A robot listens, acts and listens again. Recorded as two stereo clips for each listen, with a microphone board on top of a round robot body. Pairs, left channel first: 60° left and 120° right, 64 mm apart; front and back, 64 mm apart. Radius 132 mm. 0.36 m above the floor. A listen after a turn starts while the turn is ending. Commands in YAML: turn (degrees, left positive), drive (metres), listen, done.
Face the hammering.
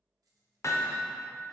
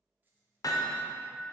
turn: 20
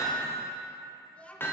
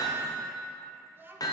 done: "Found it: hammering, straight ahead, under 1 m away."